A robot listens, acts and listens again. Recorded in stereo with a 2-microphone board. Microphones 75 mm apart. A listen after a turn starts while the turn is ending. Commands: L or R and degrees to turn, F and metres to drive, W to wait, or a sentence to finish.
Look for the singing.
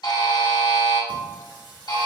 R90
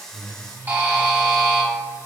L25
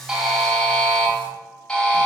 W
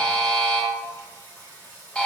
L25
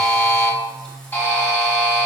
L10
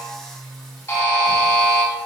Facing the singing, 1 to 2 m away.